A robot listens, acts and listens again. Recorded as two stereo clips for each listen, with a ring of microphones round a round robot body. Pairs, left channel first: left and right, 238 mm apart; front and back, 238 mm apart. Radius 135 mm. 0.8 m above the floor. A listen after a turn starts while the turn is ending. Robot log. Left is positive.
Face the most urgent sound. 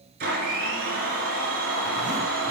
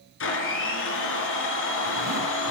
cmd idle
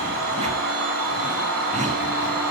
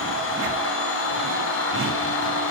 cmd idle
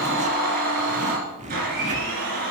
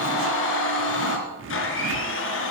end: I can't make out anything urgent to turn to.